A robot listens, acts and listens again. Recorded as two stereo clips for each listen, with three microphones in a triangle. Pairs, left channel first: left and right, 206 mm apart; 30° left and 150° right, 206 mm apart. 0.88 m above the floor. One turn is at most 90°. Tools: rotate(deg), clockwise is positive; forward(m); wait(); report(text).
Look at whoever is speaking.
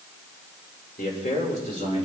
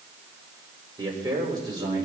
rotate(-90)
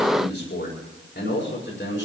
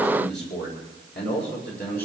rotate(-65)
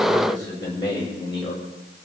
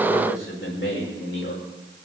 rotate(-25)
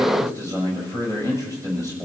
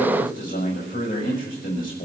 rotate(15)
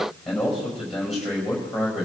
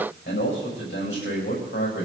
report("Facing the man speaking, over 4 m away.")